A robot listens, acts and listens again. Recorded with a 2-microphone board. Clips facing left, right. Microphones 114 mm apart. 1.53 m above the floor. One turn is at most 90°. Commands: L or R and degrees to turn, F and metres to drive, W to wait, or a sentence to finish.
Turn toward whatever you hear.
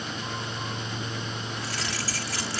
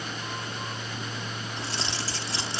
R25
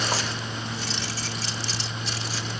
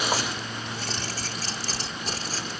R90
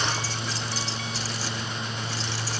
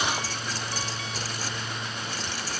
R45
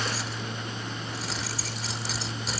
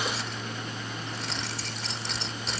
Facing the keys jangling.